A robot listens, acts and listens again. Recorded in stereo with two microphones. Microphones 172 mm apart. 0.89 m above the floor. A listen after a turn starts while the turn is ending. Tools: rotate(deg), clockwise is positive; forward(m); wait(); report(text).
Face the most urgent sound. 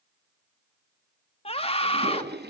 rotate(-35)
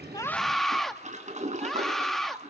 report("Found it: a scream, straight ahead.")